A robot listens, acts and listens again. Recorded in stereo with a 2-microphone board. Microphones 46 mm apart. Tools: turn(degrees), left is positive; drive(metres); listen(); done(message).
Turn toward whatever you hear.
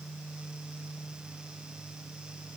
listen()
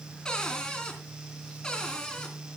turn(degrees=15)
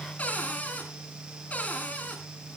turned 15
turn(degrees=145)
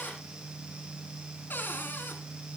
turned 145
turn(degrees=50)
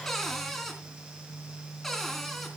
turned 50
done("Found it: a cupboard door, straight ahead.")